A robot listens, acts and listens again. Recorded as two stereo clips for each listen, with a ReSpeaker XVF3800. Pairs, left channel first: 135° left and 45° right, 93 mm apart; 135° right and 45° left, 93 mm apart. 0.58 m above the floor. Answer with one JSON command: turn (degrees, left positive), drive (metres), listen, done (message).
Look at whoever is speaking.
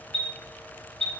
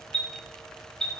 {"listen": true}
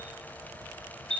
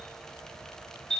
{"listen": true}
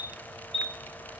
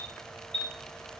{"done": "I can't make out anyone speaking to turn to."}